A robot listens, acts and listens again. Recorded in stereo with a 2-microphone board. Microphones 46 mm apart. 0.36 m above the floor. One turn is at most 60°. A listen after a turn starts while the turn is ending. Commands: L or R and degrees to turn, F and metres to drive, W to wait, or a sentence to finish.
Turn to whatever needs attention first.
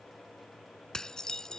W
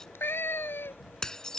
W
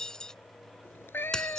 I can't make out anything urgent, only a cat meowing and dishes clattering.